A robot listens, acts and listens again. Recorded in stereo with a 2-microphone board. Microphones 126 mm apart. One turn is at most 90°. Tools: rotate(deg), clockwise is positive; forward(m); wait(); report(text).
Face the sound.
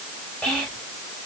rotate(-30)
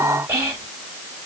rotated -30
rotate(25)
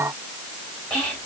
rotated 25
rotate(-10)
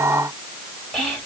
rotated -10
report("Facing the whispering, 1 to 2 m away.")